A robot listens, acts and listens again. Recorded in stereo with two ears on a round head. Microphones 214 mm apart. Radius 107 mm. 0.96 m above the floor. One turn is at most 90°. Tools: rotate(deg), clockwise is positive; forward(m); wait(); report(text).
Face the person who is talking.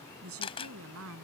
rotate(65)
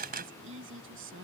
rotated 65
rotate(55)
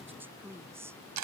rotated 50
rotate(10)
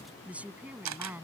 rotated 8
rotate(10)
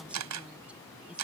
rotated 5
wait()
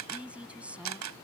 report("Facing the woman speaking.")